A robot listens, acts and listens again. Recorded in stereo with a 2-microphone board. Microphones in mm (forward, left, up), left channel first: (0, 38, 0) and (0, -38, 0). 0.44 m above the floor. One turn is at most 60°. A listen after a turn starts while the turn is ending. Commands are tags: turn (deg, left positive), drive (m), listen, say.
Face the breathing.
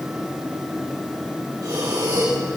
<turn deg="-50"/>
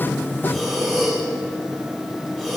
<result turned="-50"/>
<say>Found it: breathing, straight ahead.</say>